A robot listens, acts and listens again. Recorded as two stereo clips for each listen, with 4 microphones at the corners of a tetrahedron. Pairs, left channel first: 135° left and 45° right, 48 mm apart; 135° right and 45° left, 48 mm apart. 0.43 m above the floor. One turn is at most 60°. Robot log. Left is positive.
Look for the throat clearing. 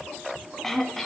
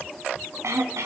note: The throat clearing: 50° left.
cmd yaw +50
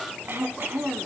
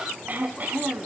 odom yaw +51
end: Found it: throat clearing, straight ahead, 1 to 2 m away.